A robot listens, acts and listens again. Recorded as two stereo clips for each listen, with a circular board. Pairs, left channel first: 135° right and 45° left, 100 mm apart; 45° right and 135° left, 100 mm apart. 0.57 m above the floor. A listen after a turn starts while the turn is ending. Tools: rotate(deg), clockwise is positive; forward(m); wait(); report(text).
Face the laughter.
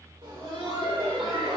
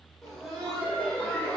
rotate(-30)
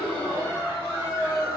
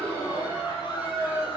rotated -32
rotate(10)
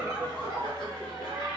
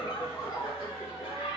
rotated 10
report("Found it: laughter, straight ahead, 2 to 4 m away.")